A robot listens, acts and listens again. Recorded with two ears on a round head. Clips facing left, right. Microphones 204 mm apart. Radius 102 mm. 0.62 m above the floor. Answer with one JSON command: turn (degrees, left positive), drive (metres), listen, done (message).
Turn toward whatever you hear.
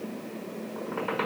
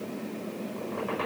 {"turn": 90}
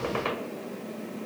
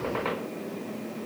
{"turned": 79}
{"turn": 20}
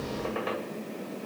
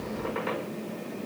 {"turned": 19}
{"done": "Facing the squeak."}